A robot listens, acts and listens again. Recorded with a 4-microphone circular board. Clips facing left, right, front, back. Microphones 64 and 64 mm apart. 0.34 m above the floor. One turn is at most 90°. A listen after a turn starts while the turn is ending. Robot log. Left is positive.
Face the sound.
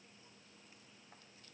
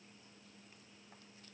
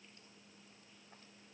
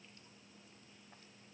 cmd idle
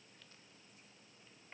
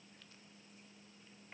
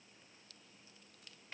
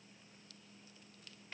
cmd idle
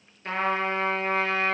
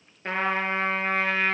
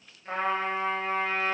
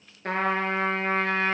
note: The trumpet: 150° right.
cmd yaw -90
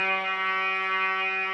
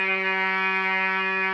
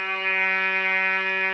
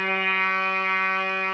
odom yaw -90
note: The trumpet is now 60° right.
cmd yaw -60
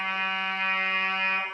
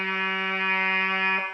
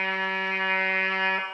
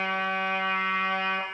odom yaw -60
note: The trumpet is now 30° right.
cmd yaw -30
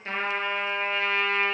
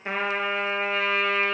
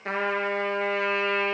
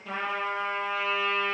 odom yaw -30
end: Facing the trumpet.